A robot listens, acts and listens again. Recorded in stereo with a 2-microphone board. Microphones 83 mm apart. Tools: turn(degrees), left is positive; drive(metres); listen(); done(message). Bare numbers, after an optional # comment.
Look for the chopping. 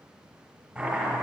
turn(-30)
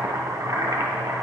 # So it is at 145° right.
turn(-145)
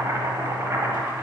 # The chopping is now 40° right.
turn(-40)
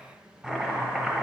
# The chopping is now 10° right.
turn(-10)
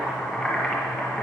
done("Facing the chopping, 1 to 2 m away.")